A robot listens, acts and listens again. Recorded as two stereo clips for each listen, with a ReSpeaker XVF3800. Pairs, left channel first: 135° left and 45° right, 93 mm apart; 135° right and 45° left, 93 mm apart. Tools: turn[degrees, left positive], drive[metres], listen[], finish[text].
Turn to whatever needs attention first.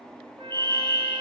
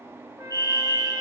Thought: The fire alarm: 80° right.
Action: turn[-80]
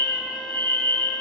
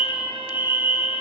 Thought: The fire alarm is now 20° right.
Action: turn[-20]
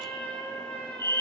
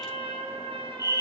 Action: finish[Facing the fire alarm.]